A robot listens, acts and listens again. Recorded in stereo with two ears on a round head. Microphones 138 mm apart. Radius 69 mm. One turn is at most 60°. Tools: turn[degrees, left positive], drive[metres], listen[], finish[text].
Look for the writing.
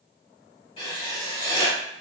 Thought: The writing: about 35° left or 145° left.
Action: turn[35]
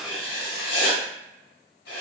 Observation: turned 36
Thought: So it is at 110° left.
Action: turn[60]
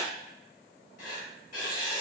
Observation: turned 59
Thought: The writing is now 55° left.
Action: turn[55]
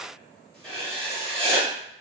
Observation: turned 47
Action: finish[Facing the writing.]